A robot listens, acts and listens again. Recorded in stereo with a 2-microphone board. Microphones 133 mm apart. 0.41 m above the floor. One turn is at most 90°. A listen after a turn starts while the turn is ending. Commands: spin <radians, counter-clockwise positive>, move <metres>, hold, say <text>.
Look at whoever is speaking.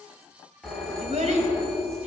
spin -1.13
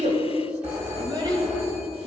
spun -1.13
spin -0.79
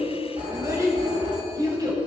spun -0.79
spin -0.61
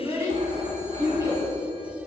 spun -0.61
spin -0.44
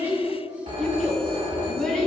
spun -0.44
say Found it: a child speaking, straight ahead, 2 to 4 m away.